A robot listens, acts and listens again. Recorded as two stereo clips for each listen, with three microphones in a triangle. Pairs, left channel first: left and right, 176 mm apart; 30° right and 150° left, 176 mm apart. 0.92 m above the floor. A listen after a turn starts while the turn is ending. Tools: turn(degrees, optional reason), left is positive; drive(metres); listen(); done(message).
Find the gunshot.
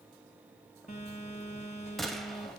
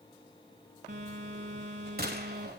turn(degrees=180, reason="The gunshot: straight behind.")
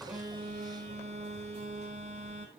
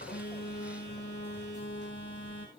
done("Facing where the gunshot came from. I can't hear it now.")